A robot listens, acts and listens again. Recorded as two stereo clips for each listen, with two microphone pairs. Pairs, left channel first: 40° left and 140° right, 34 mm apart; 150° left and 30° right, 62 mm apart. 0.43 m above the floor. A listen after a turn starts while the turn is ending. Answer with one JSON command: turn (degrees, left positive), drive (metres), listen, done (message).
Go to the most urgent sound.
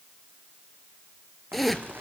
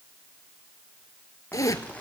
{"listen": true}
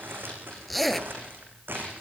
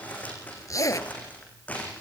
{"listen": true}
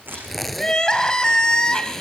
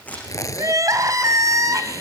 {"turn": -25}
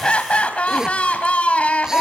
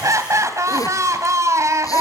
{"drive": 1.0}
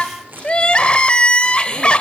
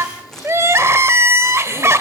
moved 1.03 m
{"drive": 1.0}
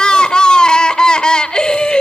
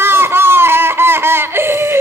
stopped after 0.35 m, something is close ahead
{"turn": -10}
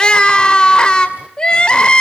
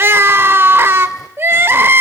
{"done": "Arrived at the crying, straight ahead."}